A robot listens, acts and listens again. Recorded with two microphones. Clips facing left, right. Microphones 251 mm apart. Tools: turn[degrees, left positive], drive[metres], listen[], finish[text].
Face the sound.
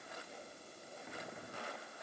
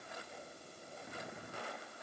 Action: listen[]
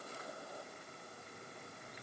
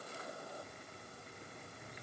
Action: listen[]
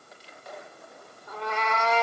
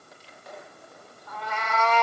Thought: The cat meowing: about 25° left or 155° left.
Action: turn[25]
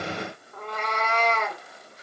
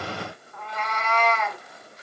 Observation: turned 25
Thought: So it is at 125° left.
Action: turn[125]
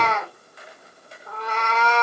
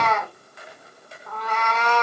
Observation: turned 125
Thought: The cat meowing is now 30° left.
Action: turn[30]
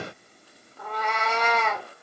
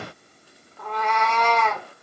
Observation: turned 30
Thought: The cat meowing is now 10° left.
Action: turn[10]
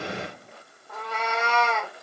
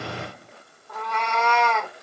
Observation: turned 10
Action: finish[Facing the cat meowing.]